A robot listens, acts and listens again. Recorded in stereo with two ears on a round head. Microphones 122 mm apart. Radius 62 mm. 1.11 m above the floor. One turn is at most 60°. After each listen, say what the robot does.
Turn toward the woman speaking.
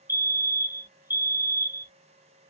Keep listening.
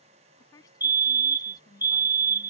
Turn 30° left.
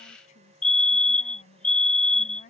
Turn 60° left.
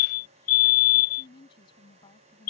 Turn 35° left.
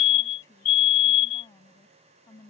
Turn 20° left.
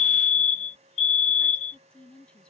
Found it: a woman speaking, straight ahead.